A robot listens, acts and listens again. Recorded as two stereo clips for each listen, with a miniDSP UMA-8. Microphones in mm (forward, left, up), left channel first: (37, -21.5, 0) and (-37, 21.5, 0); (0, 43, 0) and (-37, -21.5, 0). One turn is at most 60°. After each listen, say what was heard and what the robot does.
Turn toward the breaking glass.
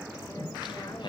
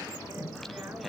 Keep listening.
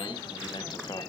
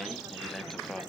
Keep listening.
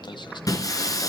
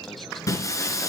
The breaking glass: 15° left. Turn 15° left.
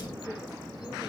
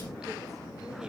Facing where the breaking glass came from. I can't hear it now.